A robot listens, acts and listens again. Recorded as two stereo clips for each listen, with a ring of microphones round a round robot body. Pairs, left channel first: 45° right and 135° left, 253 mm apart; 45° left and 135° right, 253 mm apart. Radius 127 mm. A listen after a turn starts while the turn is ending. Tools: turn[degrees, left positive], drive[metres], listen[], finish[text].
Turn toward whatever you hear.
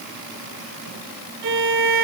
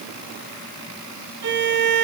Thought: The violin: straight behind.
Action: turn[180]
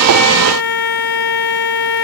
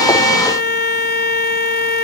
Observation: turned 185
Action: finish[Facing the violin.]